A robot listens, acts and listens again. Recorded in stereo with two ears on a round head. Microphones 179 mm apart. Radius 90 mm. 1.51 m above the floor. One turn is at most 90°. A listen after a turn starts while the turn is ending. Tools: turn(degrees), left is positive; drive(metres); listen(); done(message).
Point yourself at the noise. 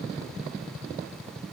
listen()
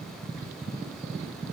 listen()
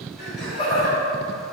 turn(degrees=35)
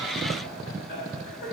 turn(degrees=90)
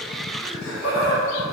turn(degrees=30)
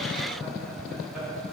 listen()
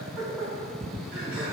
turn(degrees=-10)
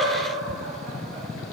listen()
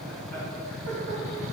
listen()
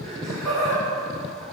done("Facing the laughter, 2 to 4 m away.")